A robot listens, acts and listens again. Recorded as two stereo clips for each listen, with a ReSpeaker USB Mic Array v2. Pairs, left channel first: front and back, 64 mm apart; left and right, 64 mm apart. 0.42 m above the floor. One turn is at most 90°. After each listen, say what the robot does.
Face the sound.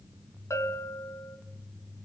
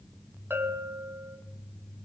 Turn 40° right.
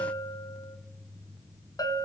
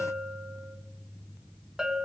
Turn 10° right.
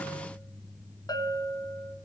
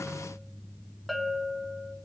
Found it: a bell, straight ahead.